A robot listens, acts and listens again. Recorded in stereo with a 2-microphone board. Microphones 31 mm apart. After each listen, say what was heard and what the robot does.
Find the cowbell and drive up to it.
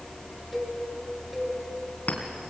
Turn 30° right.
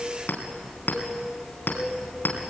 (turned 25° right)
So it is at 150° right. Turn 150° right.
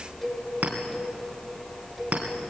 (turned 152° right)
Drive 1.0 m forward.
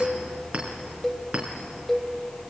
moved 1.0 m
The cowbell is now 10° left. Turn 10° left.
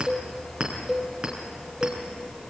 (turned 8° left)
Drive 1.0 m forward.
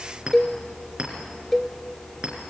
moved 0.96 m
The cowbell is now 10° left. Turn 10° left.
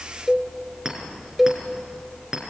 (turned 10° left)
Drive 1.0 m forward.
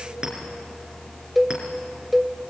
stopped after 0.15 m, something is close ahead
I am next to the cowbell.